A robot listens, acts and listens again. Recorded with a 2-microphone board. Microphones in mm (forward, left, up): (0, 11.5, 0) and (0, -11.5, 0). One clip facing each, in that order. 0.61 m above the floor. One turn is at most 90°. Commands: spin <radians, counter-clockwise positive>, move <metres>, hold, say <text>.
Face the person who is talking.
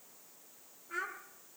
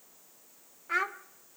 spin -1.13
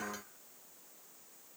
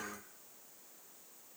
hold
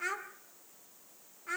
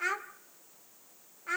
spin -0.26
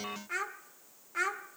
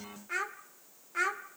say Found it: a child speaking, straight ahead, 1 to 2 m away.